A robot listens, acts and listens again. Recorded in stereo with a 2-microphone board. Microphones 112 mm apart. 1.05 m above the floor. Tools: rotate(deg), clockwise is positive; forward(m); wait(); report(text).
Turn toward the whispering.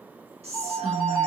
rotate(70)
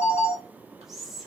report("Found it: whispering, straight ahead.")